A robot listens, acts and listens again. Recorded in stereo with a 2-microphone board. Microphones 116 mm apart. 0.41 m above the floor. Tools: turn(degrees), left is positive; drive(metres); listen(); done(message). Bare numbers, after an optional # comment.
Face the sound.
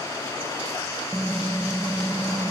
turn(30)
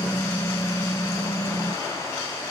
# So it is at 150° left.
turn(150)
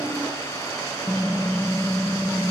# The typing on a keyboard is now 10° right.
turn(-10)
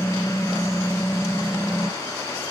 done("Facing the typing on a keyboard, under 1 m away.")